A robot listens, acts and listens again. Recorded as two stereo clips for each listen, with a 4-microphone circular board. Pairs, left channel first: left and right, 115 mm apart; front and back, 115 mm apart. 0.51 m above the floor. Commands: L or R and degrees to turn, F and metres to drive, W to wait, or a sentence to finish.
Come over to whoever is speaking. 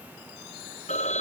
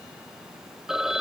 W
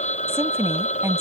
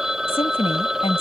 R25
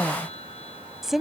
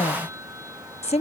F1.0
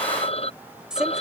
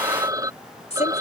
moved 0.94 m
F1.0
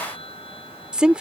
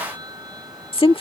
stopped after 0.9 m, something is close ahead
R10
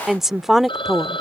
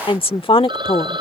I am next to the woman speaking.